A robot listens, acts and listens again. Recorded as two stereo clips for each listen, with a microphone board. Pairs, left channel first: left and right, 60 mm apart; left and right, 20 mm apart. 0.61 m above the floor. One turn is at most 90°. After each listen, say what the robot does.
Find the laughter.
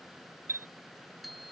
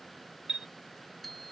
Keep listening.
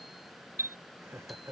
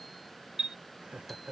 Turn 55° right.
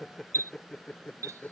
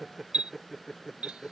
Turn 20° left.
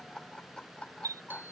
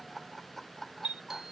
Turn 20° left.
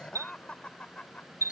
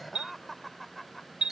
Turn 20° left.
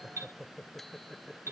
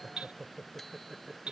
Found it: laughter, straight ahead.